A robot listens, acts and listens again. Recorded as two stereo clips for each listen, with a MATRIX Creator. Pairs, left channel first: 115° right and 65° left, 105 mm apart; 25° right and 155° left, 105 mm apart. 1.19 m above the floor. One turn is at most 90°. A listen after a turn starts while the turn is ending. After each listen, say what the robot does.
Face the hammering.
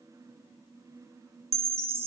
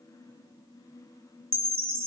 Keep listening.
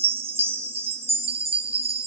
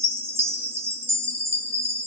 Keep listening.
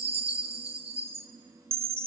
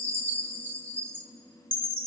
I can't make out hammering to turn to.